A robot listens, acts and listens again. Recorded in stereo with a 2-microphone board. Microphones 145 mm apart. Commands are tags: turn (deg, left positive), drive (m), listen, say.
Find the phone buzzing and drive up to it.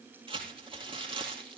<listen/>
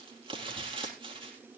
<listen/>
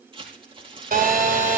<turn deg="-90"/>
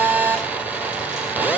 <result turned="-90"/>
<turn deg="-10"/>
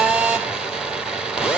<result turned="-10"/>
<drive m="1.0"/>
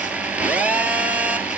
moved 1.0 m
<turn deg="-10"/>
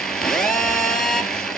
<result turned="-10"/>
<drive m="1.0"/>
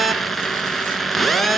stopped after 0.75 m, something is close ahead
<say>Arrived at the phone buzzing, straight ahead.</say>